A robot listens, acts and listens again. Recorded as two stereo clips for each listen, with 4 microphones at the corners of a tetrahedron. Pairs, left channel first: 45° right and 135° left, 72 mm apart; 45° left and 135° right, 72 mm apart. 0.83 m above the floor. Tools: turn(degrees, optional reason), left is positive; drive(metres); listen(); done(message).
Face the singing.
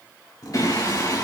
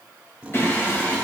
turn(degrees=-10, reason="The singing: 10° right.")
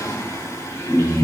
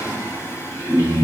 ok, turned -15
done("Facing the singing.")